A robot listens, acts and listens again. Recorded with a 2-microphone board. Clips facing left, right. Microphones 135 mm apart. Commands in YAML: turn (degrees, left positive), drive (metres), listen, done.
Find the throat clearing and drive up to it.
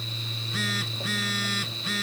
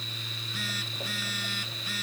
listen: true
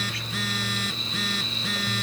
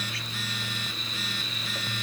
listen: true
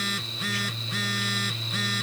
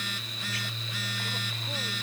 done: "I can't make out throat clearing to turn to."